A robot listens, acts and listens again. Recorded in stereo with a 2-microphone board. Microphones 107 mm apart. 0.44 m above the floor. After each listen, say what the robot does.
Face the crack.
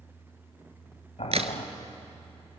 Turn 65° right.
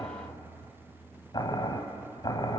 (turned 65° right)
Keep listening.
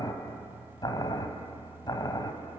I heard a crack, but can't make it out now. It was about straight ahead or 50° right.